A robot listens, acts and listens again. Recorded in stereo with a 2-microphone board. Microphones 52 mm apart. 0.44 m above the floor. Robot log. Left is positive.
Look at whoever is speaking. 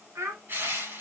note: The child speaking: about 70° right or 110° right.
cmd yaw -70
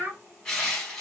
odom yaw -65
note: So it is at 35° right.
cmd yaw -35
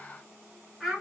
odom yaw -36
end: Facing the child speaking.